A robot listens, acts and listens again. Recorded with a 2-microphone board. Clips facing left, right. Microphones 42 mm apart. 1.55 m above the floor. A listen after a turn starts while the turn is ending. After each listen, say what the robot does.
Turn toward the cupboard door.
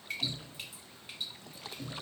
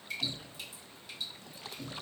Turn 15° right.
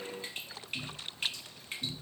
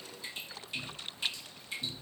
Found it: a cupboard door, straight ahead.